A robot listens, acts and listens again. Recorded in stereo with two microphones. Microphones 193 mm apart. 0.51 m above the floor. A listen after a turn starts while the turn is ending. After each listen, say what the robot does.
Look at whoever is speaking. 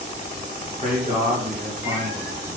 Turn 50° right.
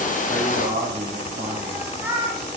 Turn 55° right.
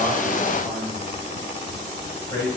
Turn 25° left.
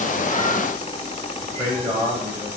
Facing the man speaking, 2 to 4 m away.